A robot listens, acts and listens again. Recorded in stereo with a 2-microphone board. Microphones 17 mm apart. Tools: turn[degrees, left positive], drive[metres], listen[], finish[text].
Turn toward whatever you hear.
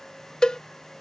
Thought: The cowbell: about 40° left or 140° left.
Action: turn[40]
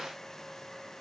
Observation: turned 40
Action: listen[]
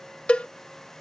Thought: So it is at 100° left.
Action: turn[100]
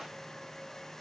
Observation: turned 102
Action: listen[]
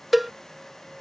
Action: finish[Facing the cowbell.]